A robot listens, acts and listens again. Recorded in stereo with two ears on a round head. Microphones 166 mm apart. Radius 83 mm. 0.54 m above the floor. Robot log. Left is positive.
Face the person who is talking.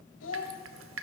cmd yaw +90
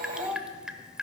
end: Facing the child speaking.